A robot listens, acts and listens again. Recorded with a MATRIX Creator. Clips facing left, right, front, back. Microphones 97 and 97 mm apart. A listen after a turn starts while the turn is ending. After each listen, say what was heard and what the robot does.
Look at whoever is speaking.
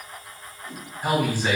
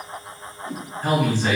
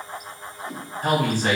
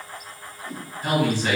The man speaking: 15° left. Turn 15° left.
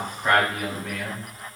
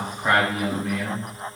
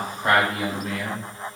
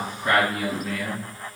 Found it: a man speaking, straight ahead.